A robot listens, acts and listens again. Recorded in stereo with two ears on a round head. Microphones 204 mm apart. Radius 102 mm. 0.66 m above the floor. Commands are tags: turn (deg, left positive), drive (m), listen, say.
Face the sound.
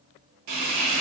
<turn deg="-90"/>
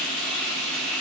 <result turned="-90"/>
<say>Found it: frying, straight ahead.</say>